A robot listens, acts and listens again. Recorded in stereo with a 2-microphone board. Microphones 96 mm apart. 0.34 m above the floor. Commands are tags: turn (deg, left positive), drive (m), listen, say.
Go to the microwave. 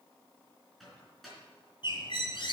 <turn deg="30"/>
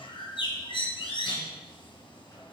<listen/>
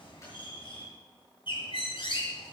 <listen/>
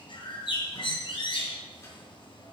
<say>I heard a microwave, but can't make it out now. It was about 30° right or 150° left. I did not reach it.</say>